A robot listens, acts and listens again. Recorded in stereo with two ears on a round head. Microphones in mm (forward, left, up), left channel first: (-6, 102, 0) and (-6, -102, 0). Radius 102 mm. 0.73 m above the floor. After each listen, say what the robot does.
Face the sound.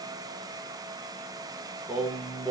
Turn 30° left.
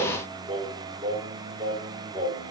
Turn 30° right.
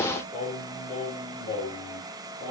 Turn 25° left.
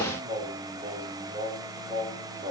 Turn 15° right.
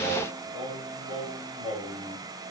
Found it: singing, straight ahead, 2 to 4 m away.